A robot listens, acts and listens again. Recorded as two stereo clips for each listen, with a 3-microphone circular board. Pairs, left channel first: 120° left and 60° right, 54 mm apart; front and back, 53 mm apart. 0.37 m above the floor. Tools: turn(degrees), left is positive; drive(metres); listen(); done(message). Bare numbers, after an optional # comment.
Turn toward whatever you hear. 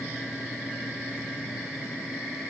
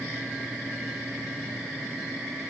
listen()
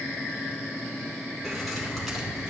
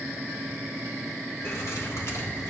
# The keys jangling: 30° left.
turn(30)
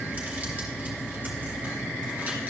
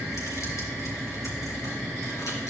done("Facing the keys jangling.")